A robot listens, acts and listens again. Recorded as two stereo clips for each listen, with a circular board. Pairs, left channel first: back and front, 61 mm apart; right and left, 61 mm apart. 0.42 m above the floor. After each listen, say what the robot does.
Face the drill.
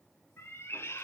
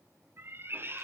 Keep listening.
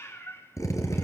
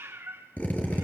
Turn 155° right.
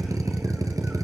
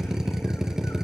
Turn 10° left.
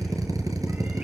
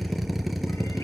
Found it: a drill, straight ahead.